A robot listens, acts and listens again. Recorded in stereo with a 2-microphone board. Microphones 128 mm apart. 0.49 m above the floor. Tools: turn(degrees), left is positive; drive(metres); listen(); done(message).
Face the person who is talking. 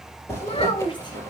turn(degrees=40)
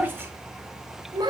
turn(degrees=-35)
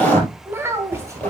turn(degrees=-20)
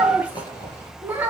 turn(degrees=-15)
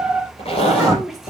done("Facing the child speaking.")